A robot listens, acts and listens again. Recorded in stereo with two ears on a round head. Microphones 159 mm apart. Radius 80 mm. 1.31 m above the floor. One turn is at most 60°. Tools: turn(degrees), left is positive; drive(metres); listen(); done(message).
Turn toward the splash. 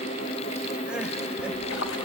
turn(degrees=60)
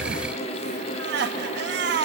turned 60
turn(degrees=30)
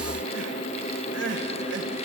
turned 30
done("I heard a splash from this way, but can't make it out now.")